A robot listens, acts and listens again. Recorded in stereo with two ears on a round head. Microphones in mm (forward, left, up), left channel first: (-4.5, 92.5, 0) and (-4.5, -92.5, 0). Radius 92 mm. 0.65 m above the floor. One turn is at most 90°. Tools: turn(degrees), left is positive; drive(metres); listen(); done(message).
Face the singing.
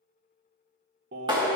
turn(degrees=-50)
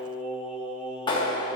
done("Found it: singing, straight ahead, 1 to 2 m away.")